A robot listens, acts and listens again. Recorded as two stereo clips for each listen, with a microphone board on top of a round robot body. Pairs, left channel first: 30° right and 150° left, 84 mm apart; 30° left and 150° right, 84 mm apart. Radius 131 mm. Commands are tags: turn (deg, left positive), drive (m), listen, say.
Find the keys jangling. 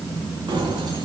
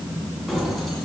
<turn deg="115"/>
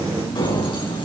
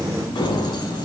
<say>Facing the keys jangling, over 4 m away.</say>